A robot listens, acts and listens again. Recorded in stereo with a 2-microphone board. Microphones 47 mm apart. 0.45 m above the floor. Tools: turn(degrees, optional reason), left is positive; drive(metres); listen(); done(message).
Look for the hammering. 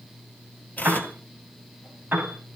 listen()
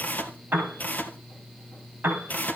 listen()
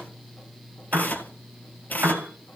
done("I can't make out hammering to turn to.")